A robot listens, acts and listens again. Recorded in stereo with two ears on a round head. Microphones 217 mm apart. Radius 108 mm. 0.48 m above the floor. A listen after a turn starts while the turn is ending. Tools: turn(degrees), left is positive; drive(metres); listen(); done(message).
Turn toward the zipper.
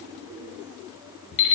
listen()
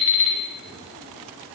listen()
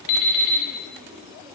done("I can't make out a zipper, only an alarm clock.")